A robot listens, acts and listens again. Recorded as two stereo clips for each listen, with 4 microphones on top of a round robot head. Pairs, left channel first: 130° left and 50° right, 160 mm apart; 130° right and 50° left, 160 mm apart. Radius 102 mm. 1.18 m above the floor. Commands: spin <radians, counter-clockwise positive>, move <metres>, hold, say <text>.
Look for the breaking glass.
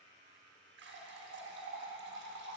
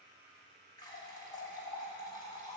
hold
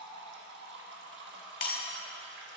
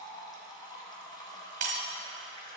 spin 1.66
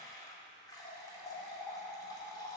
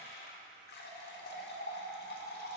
say Facing where the breaking glass came from. I can't hear it now.